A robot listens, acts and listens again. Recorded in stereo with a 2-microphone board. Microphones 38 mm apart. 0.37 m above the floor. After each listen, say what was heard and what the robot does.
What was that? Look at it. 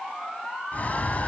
The bird: about 45° left or 135° left. Turn 45° left.
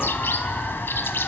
So it is at 90° left. Turn 90° left.
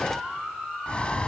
The bird is now 30° left. Turn 30° left.
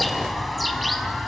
Facing the bird, under 1 m away.